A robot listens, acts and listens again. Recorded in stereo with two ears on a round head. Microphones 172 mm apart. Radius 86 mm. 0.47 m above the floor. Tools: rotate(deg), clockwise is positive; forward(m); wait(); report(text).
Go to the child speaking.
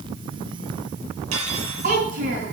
rotate(45)
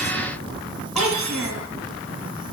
forward(1.0)
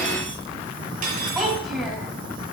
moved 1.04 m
forward(1.0)
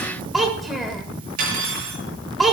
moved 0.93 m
forward(1.0)
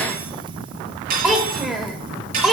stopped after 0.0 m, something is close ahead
report("Arrived at the child speaking, straight ahead.")